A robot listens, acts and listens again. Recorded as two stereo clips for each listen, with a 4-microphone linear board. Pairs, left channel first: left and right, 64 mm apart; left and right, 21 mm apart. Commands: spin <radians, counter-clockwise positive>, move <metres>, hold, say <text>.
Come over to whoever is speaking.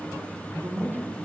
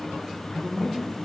spin -1.05
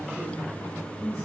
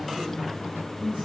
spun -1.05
spin -1.05
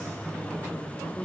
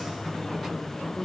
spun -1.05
spin 0.17
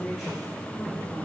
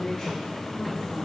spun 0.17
move 1.0
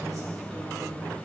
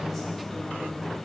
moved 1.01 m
hold
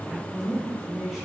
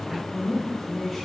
move 1.0
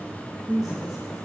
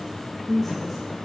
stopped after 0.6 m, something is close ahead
say Arrived at the man speaking, straight ahead.